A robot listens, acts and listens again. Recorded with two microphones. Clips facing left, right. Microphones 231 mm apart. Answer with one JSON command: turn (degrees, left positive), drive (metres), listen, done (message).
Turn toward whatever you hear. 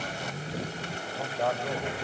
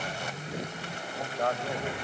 {"turn": 30}
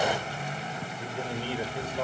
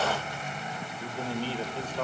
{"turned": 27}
{"turn": 30}
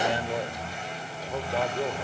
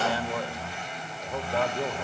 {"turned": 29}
{"turn": 30}
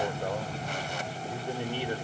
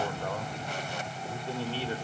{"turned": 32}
{"turn": 15}
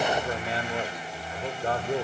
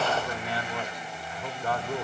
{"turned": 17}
{"turn": 155}
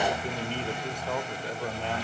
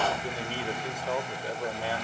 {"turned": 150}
{"done": "Found it: a man speaking, straight ahead, 1 to 2 m away."}